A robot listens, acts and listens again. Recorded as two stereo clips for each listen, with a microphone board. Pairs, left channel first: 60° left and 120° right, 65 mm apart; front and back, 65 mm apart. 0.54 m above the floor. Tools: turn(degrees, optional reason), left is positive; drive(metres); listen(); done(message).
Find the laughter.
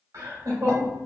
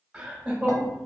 turn(degrees=-100, reason="The laughter: 100° right.")
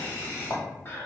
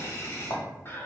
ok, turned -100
turn(degrees=30, reason="The laughter is now 30° left.")
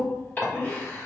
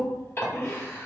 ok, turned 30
turn(degrees=30, reason="The laughter is now 30° left.")
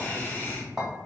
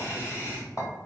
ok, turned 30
turn(degrees=20, reason="The laughter is now 20° left.")
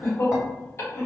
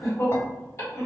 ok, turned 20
turn(degrees=30, reason="The laughter is now 30° left.")
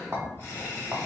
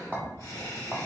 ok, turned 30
turn(degrees=15, reason="The laughter is now 15° left.")
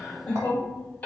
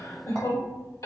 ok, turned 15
done("Found it: laughter, straight ahead, 1 to 2 m away.")